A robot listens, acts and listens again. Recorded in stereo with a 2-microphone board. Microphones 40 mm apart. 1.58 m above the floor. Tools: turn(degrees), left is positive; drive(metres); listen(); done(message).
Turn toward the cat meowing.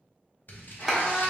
turn(degrees=55)
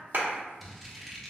listen()
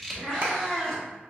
turn(degrees=10)
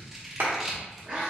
turn(degrees=-20)
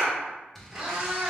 turn(degrees=-25)
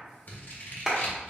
listen()
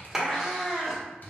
done("Facing the cat meowing.")